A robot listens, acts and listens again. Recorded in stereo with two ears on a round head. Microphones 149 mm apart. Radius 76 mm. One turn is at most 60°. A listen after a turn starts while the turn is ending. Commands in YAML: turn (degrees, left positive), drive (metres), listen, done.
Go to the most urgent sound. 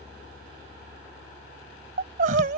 turn: -50
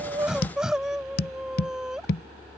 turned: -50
drive: 1.0
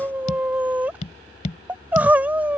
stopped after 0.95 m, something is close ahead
turn: -10
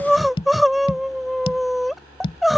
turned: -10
done: "I am next to the crying."